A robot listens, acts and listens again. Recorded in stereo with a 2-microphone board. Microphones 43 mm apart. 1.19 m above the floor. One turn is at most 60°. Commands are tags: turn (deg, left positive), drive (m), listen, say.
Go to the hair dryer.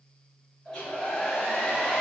<turn deg="20"/>
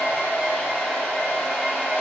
<turn deg="60"/>
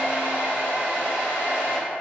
<turn deg="60"/>
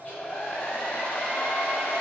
<turn deg="40"/>
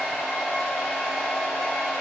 <drive m="1.0"/>
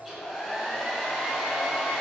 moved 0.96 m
<turn deg="-10"/>
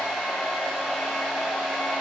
<drive m="1.0"/>
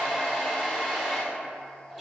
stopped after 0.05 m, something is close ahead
<say>Arrived at the hair dryer, straight ahead.</say>